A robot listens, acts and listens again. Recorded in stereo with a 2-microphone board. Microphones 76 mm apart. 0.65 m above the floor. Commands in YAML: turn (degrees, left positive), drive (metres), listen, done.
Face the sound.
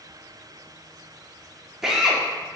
turn: -30
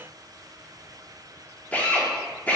turn: 20
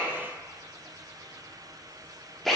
done: "Facing the drill, under 1 m away."